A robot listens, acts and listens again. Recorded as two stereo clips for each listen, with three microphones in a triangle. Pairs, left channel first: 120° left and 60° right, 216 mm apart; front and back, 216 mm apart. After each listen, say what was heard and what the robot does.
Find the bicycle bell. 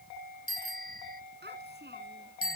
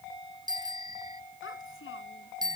The bicycle bell: 110° left. Turn 110° left.
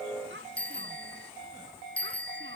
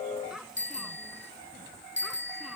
The bicycle bell is now 35° left. Turn 35° left.
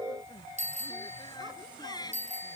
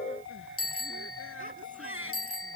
Found it: a bicycle bell, straight ahead.